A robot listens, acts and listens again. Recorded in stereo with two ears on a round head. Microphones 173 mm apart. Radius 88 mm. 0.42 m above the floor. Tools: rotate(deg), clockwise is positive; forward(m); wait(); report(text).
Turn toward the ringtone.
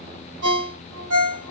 rotate(60)
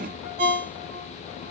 rotate(35)
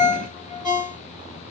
report("Found it: a ringtone, straight ahead.")